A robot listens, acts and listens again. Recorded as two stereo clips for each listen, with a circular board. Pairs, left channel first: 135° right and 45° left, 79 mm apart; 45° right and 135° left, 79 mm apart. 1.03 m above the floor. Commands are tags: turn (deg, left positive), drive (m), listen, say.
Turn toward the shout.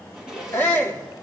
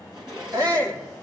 <turn deg="165"/>
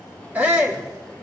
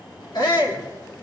<turn deg="-25"/>
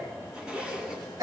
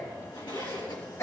<say>Facing the shout.</say>